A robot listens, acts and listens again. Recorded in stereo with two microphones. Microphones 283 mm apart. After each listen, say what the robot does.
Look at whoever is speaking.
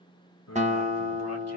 Turn 60° left.
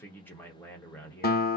Facing the man speaking, 1 to 2 m away.